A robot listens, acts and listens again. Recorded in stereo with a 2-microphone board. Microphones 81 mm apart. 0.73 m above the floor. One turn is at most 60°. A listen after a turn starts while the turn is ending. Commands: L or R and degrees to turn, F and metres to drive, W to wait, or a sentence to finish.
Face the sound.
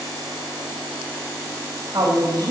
R55
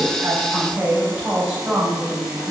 R15
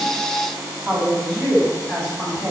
Found it: a woman speaking, straight ahead.